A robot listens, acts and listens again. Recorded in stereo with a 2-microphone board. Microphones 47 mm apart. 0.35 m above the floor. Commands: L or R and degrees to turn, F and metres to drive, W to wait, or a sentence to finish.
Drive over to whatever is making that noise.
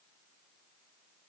W
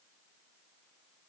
W
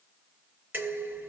R45
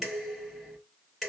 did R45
F1.0
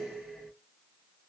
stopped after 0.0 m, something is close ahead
Something is in my way. I am facing the dishes clattering but have not reached it.